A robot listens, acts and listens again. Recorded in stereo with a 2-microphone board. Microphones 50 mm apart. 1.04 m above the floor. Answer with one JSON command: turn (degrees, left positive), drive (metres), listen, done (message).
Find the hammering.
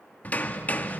{"turn": 35}
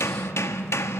{"turn": 110}
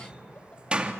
{"turn": -20}
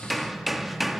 {"done": "Facing the hammering, 1 to 2 m away."}